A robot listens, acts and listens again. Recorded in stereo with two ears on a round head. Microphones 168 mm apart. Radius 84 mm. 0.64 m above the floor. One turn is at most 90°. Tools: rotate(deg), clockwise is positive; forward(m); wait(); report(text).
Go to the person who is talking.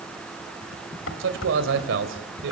rotate(75)
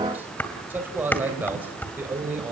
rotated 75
rotate(10)
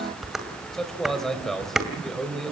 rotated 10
forward(1.0)
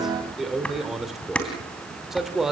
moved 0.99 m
forward(1.0)
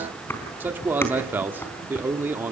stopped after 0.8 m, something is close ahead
rotate(15)
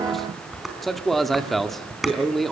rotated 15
report("I am next to the man speaking.")